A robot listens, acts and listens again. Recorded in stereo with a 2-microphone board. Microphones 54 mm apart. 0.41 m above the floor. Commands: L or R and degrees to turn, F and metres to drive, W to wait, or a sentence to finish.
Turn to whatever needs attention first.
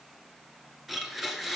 W
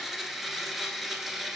W
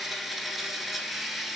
I can't make out anything urgent to turn to.